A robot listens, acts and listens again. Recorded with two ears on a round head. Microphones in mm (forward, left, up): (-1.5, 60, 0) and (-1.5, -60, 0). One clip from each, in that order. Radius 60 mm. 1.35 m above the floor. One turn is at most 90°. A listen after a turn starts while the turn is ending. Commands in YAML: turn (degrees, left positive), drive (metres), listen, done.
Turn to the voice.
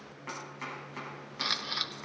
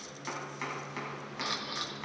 listen: true
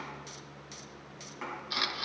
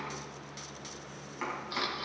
listen: true
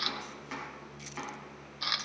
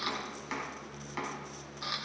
done: "I can't make out anyone speaking, only chopping and a camera shutter."